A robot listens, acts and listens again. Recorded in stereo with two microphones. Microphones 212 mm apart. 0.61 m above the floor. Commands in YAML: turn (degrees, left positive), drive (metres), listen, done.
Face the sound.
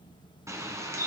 turn: -30
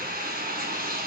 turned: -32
turn: -135
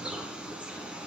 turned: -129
done: "Facing the bird."